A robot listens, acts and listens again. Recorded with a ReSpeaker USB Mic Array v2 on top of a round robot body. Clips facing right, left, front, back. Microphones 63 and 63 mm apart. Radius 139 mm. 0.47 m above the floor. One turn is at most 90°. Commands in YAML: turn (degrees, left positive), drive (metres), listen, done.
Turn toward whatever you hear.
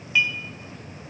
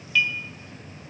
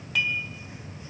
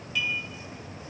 turn: -20
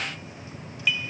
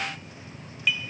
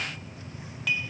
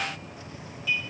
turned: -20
done: "Facing the dishes clattering."